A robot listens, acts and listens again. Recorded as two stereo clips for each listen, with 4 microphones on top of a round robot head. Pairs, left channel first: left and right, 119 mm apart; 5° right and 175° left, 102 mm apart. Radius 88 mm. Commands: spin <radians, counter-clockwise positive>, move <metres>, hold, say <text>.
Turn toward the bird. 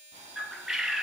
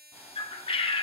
say Facing the bird.